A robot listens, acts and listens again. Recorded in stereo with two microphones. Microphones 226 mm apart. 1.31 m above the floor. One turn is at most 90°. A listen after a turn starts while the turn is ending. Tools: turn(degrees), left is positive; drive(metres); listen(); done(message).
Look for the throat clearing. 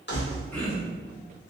turn(degrees=30)
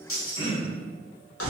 turn(degrees=90)
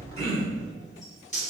turn(degrees=80)
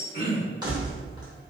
turn(degrees=30)
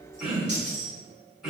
done("Facing the throat clearing, 1 to 2 m away.")